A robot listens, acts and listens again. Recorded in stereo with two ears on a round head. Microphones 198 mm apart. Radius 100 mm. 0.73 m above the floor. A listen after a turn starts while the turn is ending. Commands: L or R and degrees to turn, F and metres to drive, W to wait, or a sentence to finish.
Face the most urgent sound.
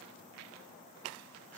W
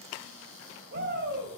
R50
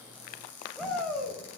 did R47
Facing the shout, 2 to 4 m away.